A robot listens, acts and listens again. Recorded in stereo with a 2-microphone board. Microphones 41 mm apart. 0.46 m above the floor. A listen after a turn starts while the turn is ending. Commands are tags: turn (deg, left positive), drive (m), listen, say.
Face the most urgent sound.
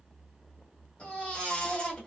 <turn deg="30"/>
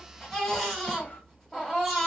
<say>Found it: a baby crying, straight ahead, 1 to 2 m away.</say>